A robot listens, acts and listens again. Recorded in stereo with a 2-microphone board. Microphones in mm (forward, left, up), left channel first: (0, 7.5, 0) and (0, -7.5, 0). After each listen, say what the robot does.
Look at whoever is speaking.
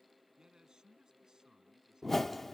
Turn 60° right.
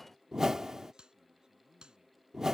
Turn 60° right.
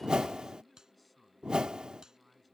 Found it: a man speaking, straight ahead.